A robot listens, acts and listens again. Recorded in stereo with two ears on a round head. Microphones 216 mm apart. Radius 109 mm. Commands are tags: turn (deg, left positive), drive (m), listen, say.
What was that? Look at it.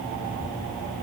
<listen/>
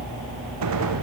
<turn deg="-75"/>
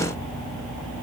<listen/>
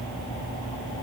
<say>I heard a gunshot, but can't make it out now. It was about straight ahead or 30° right.</say>